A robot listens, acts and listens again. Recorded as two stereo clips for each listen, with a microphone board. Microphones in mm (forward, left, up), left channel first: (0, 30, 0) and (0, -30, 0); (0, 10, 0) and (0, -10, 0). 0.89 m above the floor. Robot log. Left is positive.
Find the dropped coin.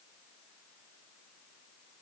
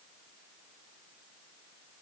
cmd idle
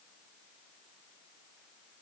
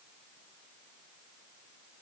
cmd idle
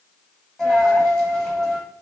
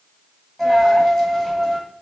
cmd yaw +30
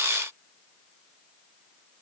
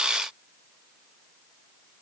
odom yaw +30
cmd idle
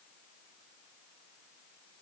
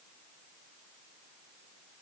end: I heard a dropped coin, but can't make it out now. It was about 20° right or 140° left.